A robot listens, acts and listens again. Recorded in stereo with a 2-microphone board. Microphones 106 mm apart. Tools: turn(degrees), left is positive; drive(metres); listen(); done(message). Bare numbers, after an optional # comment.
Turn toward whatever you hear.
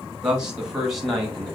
turn(30)
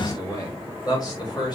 # So it is at 135° left.
turn(135)
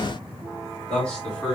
done("Found it: a man speaking, straight ahead.")